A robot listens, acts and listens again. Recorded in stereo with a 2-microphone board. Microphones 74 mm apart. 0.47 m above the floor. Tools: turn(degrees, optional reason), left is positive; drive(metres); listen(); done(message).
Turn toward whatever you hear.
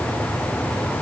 listen()
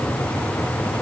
listen()
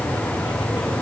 done("I can't make out anything.")